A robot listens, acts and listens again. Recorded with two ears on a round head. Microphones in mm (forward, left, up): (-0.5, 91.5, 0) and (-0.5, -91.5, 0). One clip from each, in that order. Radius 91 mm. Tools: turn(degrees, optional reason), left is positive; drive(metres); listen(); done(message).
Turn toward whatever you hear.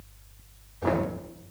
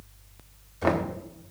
turn(degrees=-65, reason="The knocking: about 65° right or 115° right.")
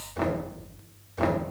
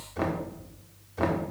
done("Facing the knocking.")